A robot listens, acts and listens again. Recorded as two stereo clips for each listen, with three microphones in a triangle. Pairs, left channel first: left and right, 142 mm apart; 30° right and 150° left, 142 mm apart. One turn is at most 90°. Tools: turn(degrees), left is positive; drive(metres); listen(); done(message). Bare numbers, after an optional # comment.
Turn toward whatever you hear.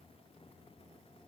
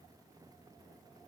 listen()
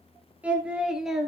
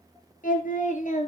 done("Found it: singing, straight ahead.")